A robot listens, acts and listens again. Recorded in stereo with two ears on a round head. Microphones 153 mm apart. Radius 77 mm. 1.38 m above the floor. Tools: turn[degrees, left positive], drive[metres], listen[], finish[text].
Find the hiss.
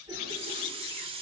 Thought: The hiss: about 30° right or 150° right.
Action: turn[-30]
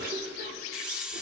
Action: finish[Facing the hiss, under 1 m away.]